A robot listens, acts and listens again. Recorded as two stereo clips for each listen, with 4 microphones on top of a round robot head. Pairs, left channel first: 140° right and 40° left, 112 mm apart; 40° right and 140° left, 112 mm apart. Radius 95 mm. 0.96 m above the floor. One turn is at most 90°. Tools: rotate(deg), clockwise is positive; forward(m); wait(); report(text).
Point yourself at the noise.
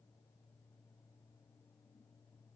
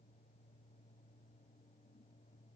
wait()
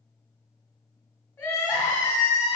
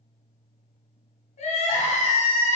rotate(70)
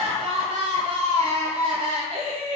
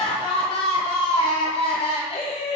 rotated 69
report("Found it: crying, straight ahead.")